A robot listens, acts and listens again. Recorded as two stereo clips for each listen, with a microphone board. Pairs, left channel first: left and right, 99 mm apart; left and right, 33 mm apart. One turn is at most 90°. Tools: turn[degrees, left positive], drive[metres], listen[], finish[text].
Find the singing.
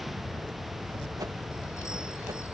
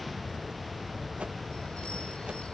Action: listen[]
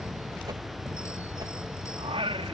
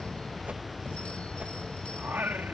Action: turn[-90]
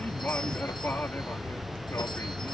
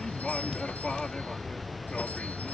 Thought: So it is at 25° left.
Action: turn[25]
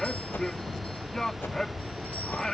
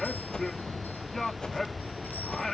Thought: The singing is now 10° left.
Action: turn[10]
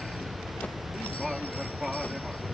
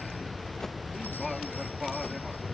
Action: finish[Facing the singing.]